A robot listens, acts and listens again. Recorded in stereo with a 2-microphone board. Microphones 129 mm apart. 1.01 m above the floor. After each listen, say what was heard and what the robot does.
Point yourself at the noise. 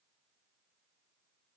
Keep listening.
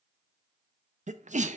The sneeze: about 75° right or 105° right. Turn 75° right.
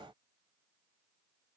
Keep listening.
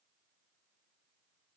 I heard a sneeze, but can't make it out now. It was about straight ahead or 30° right.